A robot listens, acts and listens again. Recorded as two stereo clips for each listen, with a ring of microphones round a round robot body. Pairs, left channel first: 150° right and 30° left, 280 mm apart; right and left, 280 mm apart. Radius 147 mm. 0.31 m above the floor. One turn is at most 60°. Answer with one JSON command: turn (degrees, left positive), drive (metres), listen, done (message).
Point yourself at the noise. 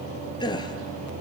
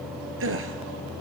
{"turn": 60}
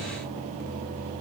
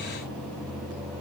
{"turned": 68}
{"turn": 60}
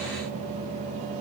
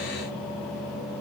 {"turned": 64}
{"done": "I heard a gasp from this way, but can't make it out now."}